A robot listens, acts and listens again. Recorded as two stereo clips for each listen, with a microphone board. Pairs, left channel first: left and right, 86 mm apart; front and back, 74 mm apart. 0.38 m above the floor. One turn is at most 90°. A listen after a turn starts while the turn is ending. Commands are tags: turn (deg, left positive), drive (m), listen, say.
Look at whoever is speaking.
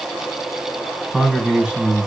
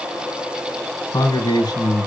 <turn deg="-10"/>
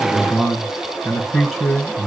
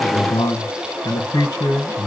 <say>Found it: a man speaking, straight ahead.</say>